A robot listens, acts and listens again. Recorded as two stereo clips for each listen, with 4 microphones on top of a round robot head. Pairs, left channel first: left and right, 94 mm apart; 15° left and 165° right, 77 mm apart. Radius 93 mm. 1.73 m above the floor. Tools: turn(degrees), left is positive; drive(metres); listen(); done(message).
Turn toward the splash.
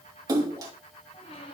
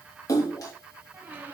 turn(degrees=-40)
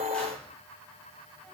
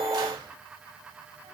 done("I heard a splash from this way, but can't make it out now.")